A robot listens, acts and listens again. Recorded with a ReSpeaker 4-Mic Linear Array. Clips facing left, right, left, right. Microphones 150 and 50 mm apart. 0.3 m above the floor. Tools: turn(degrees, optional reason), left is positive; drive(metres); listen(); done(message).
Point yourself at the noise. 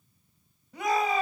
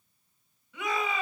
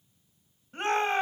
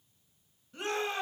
turn(degrees=45, reason="The shout: about 45° left or 135° left.")
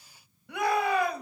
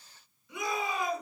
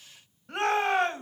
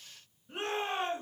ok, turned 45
turn(degrees=85, reason="So it is at 85° left.")
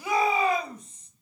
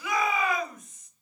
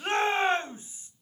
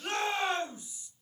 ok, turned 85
turn(degrees=30, reason="The shout is now 30° left.")
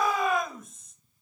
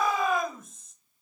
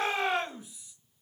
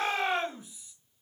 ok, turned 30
done("Facing the shout, 2 to 4 m away.")